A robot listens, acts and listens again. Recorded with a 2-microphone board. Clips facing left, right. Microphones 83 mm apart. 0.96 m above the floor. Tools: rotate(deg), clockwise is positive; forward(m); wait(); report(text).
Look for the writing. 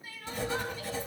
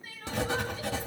rotate(90)
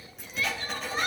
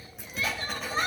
report("Found it: writing, straight ahead.")